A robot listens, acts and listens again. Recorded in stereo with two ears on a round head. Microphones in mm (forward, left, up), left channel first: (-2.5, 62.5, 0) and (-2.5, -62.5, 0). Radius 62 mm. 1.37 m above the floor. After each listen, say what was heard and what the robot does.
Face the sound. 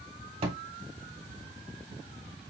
The thud: about 45° right or 135° right. Turn 45° right.
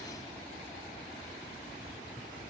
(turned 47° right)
Keep listening.
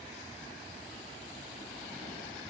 I heard a thud, but can't make it out now. It was about straight ahead or 90° right.